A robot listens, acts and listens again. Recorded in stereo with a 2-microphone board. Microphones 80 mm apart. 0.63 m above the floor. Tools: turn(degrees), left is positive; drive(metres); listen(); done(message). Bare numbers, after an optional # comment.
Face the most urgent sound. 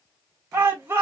# The shout: about 35° right or 145° right.
turn(-35)
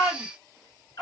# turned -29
done("Found it: a shout, straight ahead.")